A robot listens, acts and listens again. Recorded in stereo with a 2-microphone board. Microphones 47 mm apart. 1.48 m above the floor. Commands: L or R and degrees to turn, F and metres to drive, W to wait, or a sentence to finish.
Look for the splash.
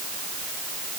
W
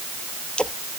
L20
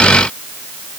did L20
W
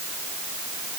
I heard a splash, but can't make it out now. It was about straight ahead or 140° left.